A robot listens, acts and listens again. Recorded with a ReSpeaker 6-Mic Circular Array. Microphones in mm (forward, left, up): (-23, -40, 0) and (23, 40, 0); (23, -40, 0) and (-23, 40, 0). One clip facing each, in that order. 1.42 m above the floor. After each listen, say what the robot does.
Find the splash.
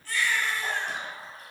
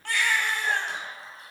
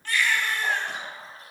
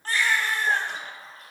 Turn 80° right.
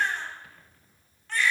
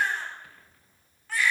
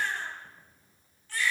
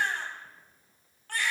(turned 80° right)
Facing where the splash came from. I can't hear it now.